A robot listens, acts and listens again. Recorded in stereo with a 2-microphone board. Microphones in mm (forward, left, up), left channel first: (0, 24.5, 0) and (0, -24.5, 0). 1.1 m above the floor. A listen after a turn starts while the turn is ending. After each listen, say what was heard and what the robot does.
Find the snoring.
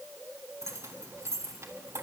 Keep listening.
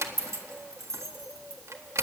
Keep listening.
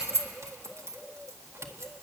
I can't make out snoring to turn to.